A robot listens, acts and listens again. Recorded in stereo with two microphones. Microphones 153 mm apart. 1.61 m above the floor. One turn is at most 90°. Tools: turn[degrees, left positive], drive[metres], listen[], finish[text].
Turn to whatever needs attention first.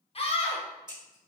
Thought: The scream: about 40° left or 140° left.
Action: turn[40]
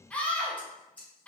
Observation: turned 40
Thought: So it is at 10° left.
Action: turn[10]
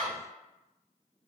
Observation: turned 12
Action: finish[Found it: a scream, straight ahead.]